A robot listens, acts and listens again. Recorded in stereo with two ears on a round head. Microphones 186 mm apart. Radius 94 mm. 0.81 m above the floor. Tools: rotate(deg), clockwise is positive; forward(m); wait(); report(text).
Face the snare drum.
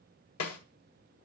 rotate(-90)
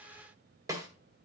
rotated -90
rotate(15)
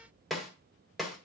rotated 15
report("Found it: a snare drum, straight ahead, 1 to 2 m away.")